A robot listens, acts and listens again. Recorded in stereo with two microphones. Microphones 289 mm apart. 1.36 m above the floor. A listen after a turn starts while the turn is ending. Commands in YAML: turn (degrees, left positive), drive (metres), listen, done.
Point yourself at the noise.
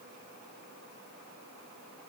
listen: true
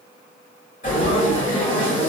turn: 25
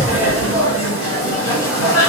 turn: 130
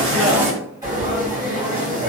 turn: -10
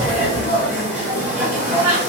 done: "Found it: frying, straight ahead, 1 to 2 m away."